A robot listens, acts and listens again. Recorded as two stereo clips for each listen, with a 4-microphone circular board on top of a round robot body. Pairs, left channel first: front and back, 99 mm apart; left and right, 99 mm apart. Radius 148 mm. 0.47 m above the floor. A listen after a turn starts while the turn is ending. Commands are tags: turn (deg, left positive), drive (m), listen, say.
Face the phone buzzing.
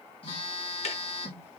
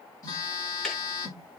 <turn deg="35"/>
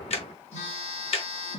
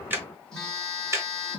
<say>Facing the phone buzzing.</say>